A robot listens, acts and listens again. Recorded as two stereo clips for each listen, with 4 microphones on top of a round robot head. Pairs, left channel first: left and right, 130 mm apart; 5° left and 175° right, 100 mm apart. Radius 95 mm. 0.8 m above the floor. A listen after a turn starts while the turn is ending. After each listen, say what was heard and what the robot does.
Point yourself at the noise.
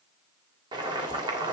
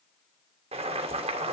The boiling: 150° right. Turn 150° right.
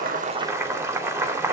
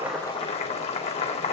The boiling is now 20° right. Turn 20° right.
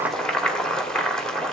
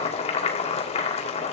Found it: boiling, straight ahead, 2 to 4 m away.